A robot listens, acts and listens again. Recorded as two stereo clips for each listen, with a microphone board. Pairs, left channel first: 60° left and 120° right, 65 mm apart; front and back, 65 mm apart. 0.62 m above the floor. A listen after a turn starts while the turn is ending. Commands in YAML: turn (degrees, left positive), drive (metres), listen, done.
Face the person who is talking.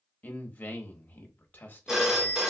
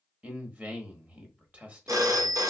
turn: 115
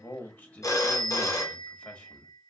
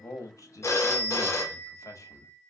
done: "Facing the man speaking."